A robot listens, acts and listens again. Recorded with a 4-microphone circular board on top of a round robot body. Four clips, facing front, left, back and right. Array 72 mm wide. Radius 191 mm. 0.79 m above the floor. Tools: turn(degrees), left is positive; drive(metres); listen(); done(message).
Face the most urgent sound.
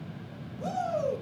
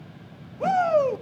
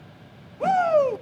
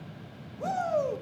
turn(degrees=145)
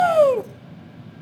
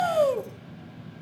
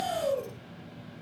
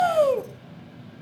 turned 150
turn(degrees=-10)
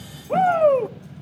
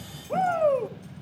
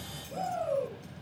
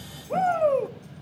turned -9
done("Found it: a shout, straight ahead, 1 to 2 m away.")